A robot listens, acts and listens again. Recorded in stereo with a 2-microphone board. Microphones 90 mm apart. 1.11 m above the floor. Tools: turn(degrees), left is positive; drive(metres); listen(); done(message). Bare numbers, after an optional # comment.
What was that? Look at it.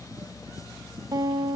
# The guitar: about 50° right or 130° right.
turn(-50)
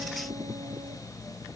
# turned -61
listen()
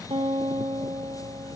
# So it is at 65° right.
turn(-65)
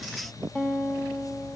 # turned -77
# The guitar is now 10° left.
turn(10)
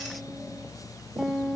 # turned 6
done("Found it: a guitar, straight ahead.")